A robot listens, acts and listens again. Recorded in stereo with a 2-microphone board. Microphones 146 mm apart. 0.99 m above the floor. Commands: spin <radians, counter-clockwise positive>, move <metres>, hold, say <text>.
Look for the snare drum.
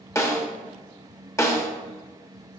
spin 0.35
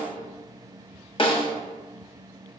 spin 2.44
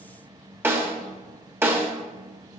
spin -0.26
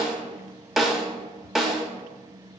say Found it: a snare drum, straight ahead.